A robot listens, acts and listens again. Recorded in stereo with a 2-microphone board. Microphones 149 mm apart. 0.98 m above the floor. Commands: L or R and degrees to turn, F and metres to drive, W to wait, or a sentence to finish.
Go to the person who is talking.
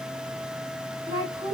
R20
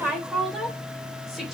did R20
F1.0
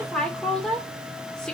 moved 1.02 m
F1.0
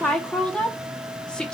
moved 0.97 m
F1.0
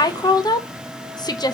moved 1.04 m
L30
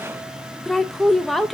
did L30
F1.0
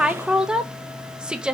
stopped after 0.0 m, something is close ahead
Arrived at the woman speaking, straight ahead.